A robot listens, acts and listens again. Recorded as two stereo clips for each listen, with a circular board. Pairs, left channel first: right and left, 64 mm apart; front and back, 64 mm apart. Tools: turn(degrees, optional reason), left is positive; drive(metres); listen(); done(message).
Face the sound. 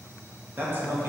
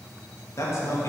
turn(degrees=40, reason="The man speaking: 40° left.")
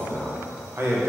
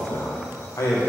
turn(degrees=50, reason="The man speaking is now 50° left.")
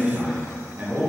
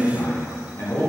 turn(degrees=35, reason="The man speaking is now 35° left.")
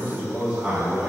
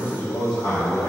turn(degrees=25, reason="The man speaking is now 25° left.")
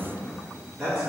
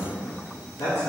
turn(degrees=15, reason="The man speaking is now 15° left.")
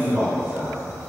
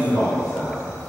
done("Found it: a man speaking, straight ahead, 2 to 4 m away.")